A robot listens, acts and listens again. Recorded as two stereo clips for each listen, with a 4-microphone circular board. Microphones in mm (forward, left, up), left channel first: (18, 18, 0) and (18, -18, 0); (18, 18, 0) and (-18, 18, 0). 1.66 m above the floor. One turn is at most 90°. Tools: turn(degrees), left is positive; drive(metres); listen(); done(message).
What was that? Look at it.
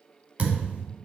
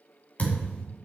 turn(degrees=-45)
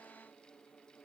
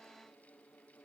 done("I heard a thud from this way, but can't make it out now.")